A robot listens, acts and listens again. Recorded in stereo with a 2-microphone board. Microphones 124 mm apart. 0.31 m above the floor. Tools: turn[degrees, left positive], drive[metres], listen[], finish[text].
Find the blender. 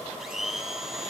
Action: turn[-30]
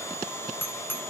Thought: So it is at 25° left.
Action: turn[25]
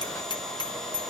Action: listen[]
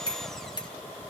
Action: listen[]
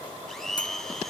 Action: finish[Facing the blender.]